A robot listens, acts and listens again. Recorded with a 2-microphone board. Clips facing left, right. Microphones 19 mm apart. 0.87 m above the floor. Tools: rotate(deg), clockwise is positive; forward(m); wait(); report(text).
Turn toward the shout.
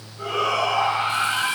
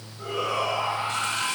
rotate(-40)
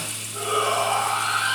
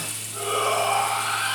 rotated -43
report("Found it: a shout, straight ahead, over 4 m away.")